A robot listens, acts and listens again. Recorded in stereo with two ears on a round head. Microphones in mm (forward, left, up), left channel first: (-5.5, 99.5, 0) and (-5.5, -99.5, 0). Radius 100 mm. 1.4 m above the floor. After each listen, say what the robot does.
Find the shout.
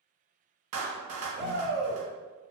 Turn 45° right.
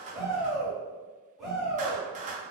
Facing the shout.